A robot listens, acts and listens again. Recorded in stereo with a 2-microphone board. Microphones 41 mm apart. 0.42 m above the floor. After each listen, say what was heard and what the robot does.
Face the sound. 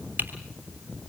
The typing on a keyboard: about 50° right or 130° right. Turn 50° right.
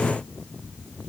Keep listening.
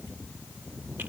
Keep listening.
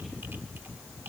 I heard typing on a keyboard, but can't make it out now. It was about straight ahead or 80° right.